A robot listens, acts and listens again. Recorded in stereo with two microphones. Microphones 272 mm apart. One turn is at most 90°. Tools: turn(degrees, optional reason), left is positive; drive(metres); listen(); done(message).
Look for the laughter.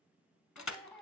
turn(degrees=30)
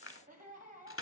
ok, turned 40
turn(degrees=-35, reason="So it is at 35° right.")
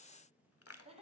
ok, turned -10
turn(degrees=-25, reason="The laughter is now 25° right.")
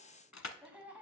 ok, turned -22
done("Found it: laughter, straight ahead, 1 to 2 m away.")